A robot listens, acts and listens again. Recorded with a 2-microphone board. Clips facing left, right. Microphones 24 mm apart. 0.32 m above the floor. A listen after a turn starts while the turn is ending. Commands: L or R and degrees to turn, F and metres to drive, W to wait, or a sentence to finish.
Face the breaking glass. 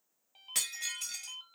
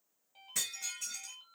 L90
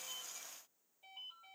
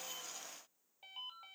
I heard breaking glass from this way, but can't make it out now.